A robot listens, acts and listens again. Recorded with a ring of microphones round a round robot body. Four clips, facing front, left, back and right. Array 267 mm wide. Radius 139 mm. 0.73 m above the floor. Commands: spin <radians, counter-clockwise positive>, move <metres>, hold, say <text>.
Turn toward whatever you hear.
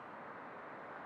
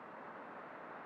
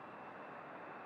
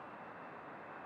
hold
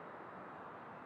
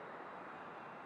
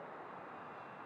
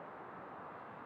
hold
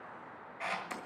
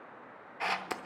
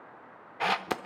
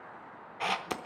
spin -2.97
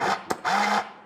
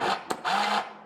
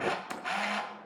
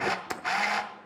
spin 0.35
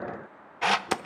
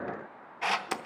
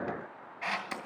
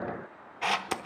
say Found it: a camera shutter, straight ahead.